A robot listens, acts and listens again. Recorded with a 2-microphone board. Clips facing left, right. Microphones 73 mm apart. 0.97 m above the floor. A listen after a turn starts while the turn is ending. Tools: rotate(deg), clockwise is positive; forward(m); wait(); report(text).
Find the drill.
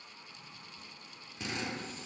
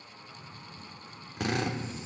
rotate(70)
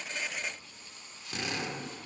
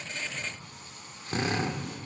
rotate(40)
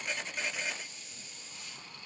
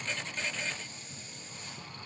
wait()
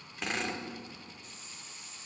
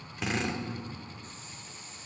report("Facing the drill.")